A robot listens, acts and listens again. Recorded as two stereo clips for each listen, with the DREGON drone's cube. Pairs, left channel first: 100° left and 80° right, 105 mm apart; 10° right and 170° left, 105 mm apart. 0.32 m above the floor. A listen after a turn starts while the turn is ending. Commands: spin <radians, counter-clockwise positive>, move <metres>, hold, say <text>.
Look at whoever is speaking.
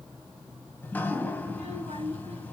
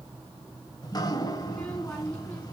spin -1.57
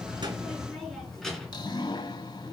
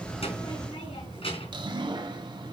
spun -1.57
spin 0.26
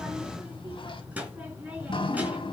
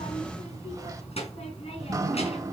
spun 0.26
say Facing the child speaking, 2 to 4 m away.